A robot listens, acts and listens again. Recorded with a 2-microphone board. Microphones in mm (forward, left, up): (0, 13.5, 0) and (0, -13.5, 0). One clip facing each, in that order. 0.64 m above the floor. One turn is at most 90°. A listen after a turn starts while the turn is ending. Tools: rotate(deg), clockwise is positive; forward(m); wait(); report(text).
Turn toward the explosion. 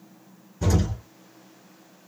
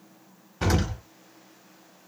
rotate(75)
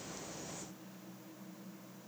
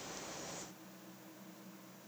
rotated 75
wait()
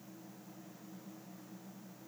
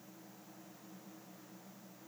report("I heard an explosion, but can't make it out now. It was about straight ahead or 30° right.")